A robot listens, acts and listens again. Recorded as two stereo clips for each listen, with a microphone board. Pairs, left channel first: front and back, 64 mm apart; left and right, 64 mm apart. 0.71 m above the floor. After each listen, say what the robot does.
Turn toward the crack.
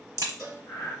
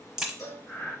Turn 170° right.
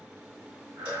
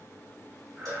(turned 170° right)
Facing where the crack came from. I can't hear it now.